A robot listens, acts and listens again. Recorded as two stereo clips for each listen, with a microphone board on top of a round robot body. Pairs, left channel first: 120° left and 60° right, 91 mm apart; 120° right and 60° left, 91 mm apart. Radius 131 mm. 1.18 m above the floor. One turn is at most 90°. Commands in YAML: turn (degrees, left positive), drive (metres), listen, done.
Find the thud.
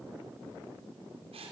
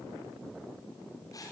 listen: true
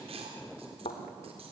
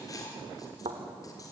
turn: 90
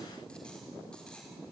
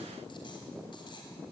done: "Facing where the thud came from. I can't hear it now."